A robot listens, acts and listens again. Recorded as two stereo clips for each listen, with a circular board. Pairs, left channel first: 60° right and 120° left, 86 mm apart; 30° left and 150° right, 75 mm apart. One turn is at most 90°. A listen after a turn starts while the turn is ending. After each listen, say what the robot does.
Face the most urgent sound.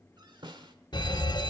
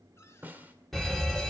Turn 55° right.
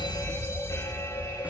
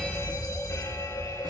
Turn 10° right.
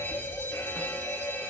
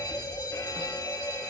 Found it: a fire alarm, straight ahead, 2 to 4 m away.